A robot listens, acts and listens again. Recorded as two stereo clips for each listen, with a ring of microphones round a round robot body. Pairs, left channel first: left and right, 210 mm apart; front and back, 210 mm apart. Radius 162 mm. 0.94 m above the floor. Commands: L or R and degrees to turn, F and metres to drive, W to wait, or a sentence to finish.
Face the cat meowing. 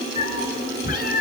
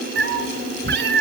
L150
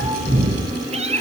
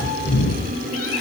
R30
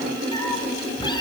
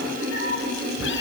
L20
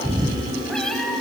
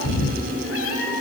Facing the cat meowing, over 4 m away.